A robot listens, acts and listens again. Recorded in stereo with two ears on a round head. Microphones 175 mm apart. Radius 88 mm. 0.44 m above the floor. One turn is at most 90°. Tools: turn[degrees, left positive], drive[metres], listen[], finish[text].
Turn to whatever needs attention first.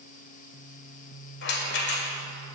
Action: listen[]
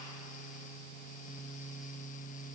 Action: listen[]
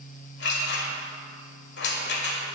Action: finish[I can't make out anything urgent, only a rattle.]